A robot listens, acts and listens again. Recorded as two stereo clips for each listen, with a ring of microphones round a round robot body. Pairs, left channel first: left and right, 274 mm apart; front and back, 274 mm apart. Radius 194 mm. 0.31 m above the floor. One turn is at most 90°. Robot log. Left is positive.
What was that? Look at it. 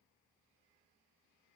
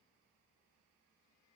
cmd idle
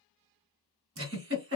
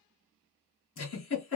note: The giggle: 55° right.
cmd yaw -55
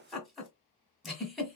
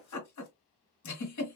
end: Found it: a giggle, straight ahead, 1 to 2 m away.